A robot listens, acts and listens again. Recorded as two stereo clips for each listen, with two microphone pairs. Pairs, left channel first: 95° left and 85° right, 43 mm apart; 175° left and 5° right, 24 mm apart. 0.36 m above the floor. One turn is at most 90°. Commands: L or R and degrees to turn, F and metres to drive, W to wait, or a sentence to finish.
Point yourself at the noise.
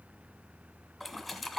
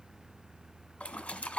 R90
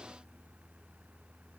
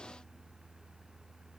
R85
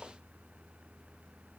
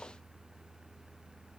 I heard a splash from this way, but can't make it out now.